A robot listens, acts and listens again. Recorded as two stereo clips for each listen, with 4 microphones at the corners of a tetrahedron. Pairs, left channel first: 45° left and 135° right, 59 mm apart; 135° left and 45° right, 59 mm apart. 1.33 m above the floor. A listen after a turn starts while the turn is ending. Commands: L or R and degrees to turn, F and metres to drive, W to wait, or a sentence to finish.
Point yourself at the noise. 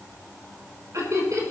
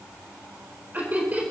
R105
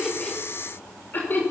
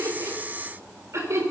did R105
R10
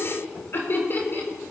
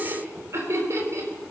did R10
R10
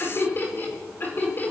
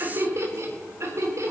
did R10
R10
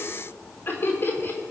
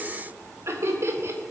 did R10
Found it: laughter, straight ahead.